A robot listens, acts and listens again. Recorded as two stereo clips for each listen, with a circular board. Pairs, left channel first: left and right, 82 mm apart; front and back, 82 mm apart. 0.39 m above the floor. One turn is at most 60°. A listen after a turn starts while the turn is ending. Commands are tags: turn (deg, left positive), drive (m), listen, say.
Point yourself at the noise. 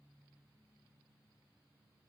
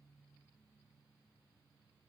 <listen/>
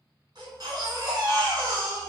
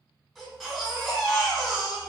<turn deg="-60"/>
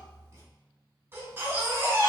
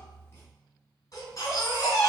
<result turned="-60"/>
<turn deg="-30"/>
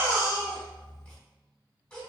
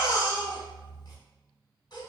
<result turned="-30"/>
<turn deg="15"/>
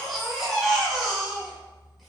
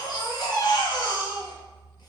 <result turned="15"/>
<say>Facing the baby crying.</say>